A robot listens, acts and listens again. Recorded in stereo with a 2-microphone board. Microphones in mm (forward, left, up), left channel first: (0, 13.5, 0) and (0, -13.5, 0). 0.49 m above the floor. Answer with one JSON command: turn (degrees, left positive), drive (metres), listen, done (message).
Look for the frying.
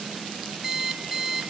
{"listen": true}
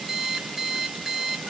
{"listen": true}
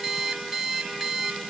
{"done": "I can't make out frying, only an alarm clock."}